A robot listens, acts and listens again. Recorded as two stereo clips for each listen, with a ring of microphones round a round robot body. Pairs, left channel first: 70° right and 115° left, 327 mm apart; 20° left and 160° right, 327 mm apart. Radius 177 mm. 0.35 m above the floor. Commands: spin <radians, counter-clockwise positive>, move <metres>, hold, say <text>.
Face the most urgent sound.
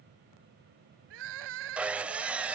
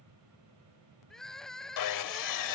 spin 1.92
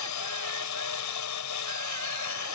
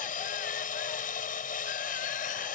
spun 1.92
hold
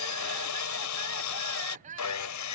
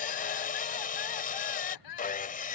spin 0.79
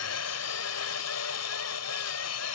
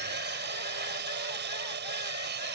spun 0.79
hold
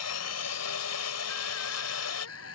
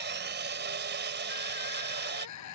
spin -0.35
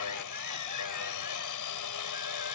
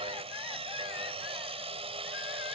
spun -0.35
hold
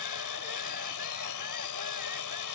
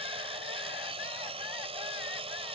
hold
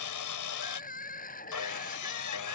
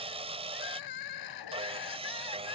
say Facing the crying.